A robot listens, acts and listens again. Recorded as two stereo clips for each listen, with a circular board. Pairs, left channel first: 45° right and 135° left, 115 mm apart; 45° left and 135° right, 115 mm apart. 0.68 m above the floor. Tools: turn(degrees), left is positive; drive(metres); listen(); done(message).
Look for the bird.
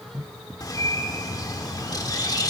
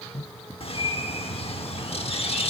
turn(degrees=10)
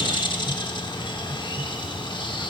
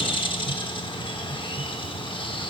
done("Found it: a bird, straight ahead, 1 to 2 m away.")